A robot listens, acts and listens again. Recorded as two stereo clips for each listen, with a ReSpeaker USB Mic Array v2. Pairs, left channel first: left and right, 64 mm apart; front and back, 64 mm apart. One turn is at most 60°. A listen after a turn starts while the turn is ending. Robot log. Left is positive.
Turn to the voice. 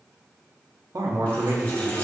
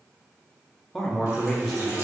note: The man speaking: 85° right.
cmd yaw -60
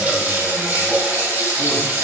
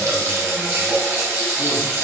note: Nothing new. It was at 25° right.
cmd yaw -25
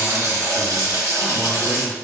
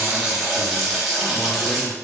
cmd idle
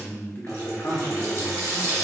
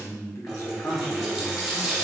note: The man speaking is now 35° left.
cmd yaw +35
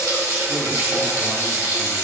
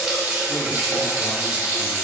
cmd idle
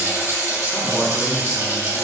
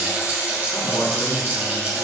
cmd idle
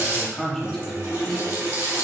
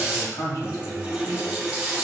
note: The man speaking is now 10° left.
cmd yaw +10
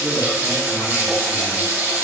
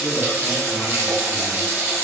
cmd idle
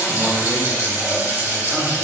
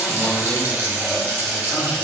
cmd idle
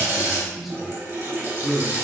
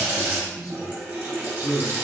end: Found it: a man speaking, straight ahead.